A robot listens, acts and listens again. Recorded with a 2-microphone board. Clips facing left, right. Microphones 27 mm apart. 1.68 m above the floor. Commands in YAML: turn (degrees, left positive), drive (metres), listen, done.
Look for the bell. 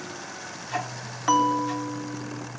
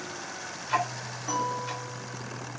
turn: 60
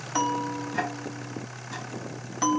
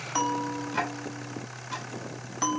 done: "Found it: a bell, straight ahead."